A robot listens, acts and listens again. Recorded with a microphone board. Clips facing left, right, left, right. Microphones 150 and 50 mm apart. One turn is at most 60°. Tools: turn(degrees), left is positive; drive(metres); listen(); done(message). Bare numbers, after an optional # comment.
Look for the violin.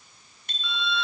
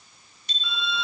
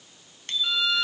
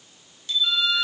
turn(30)
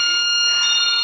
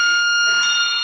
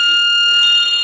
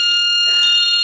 # So it is at 155° left.
turn(60)
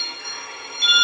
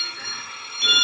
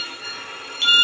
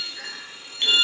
# The violin is now 115° left.
turn(60)
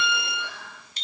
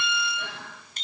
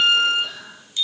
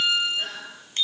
# The violin is now 75° left.
turn(60)
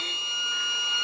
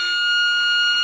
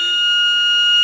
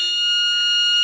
# The violin is now 40° left.
turn(40)
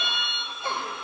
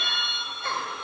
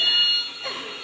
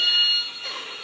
done("Facing the violin, under 1 m away.")